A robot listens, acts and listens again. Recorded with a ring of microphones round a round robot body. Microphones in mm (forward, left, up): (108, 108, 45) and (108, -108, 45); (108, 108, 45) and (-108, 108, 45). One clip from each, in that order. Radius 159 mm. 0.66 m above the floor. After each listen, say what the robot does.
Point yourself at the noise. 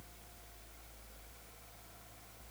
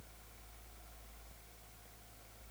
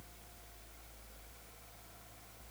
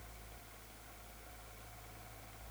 Keep listening.
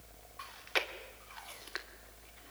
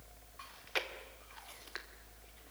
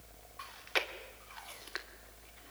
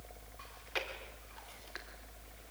Turn 25° left.
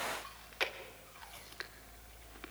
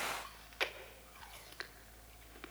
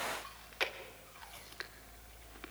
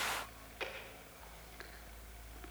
Turn 10° right.
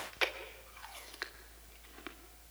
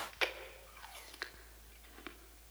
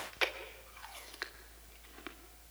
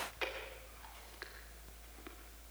Facing the chewing, 2 to 4 m away.